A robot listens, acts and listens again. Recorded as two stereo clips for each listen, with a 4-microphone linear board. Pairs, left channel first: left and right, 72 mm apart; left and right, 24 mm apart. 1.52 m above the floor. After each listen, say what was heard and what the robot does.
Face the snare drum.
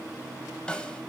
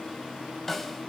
Turn 30° left.
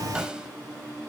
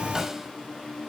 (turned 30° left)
Keep listening.
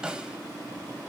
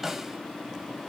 So it is at 15° right. Turn 15° right.
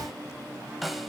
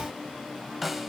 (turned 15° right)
Found it: a snare drum, straight ahead.